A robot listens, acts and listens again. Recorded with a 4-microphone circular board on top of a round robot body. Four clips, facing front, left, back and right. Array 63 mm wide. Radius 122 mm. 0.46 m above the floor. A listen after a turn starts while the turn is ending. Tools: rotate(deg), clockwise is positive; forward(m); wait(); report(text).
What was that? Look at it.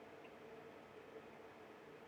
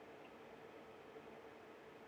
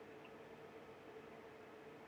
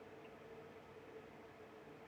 wait()
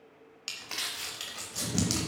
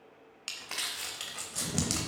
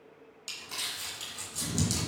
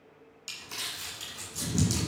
rotate(-65)
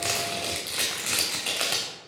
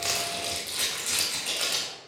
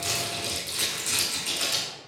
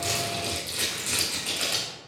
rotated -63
report("Found it: crumpling, straight ahead, 1 to 2 m away.")